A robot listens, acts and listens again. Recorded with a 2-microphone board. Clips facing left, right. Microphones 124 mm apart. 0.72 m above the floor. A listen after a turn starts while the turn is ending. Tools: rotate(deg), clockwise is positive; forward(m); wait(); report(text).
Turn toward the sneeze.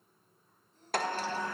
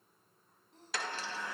rotate(90)
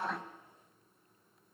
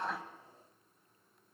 report("Facing where the sneeze came from. I can't hear it now.")